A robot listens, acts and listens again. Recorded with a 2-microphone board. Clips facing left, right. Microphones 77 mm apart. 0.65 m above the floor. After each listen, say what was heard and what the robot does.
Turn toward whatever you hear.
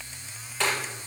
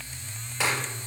Turn 30° right.
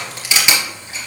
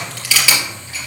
So it is at 20° left. Turn 20° left.
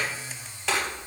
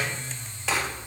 Keep listening.
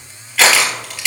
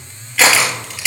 Facing the crushing.